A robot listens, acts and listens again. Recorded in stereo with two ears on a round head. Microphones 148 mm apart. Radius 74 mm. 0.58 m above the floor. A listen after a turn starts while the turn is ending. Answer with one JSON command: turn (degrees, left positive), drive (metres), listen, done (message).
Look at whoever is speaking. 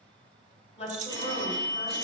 {"turn": 35}
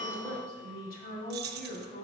{"turn": 105}
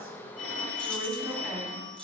{"done": "Facing the woman speaking."}